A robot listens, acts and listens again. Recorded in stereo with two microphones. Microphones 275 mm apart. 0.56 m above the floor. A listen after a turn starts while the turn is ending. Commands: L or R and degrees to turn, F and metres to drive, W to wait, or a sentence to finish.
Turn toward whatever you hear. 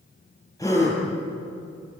L30
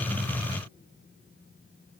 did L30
W
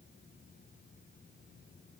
I heard a gasp, but can't make it out now. It was about 20° right or 140° left.